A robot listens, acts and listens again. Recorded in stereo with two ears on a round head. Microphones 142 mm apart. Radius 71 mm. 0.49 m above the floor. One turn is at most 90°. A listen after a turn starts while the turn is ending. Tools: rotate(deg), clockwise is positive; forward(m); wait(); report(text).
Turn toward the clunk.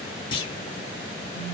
rotate(-30)
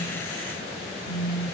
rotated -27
wait()
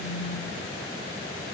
report("I heard a clunk, but can't make it out now. It was about straight ahead or 125° left.")